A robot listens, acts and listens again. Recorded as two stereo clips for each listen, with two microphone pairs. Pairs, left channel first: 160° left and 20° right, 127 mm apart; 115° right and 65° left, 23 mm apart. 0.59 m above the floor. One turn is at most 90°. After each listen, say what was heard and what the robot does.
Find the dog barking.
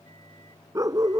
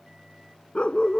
The dog barking: 80° right. Turn 80° right.
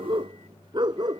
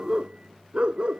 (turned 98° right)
The dog barking is now 35° left. Turn 35° left.
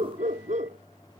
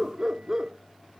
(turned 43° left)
Facing the dog barking.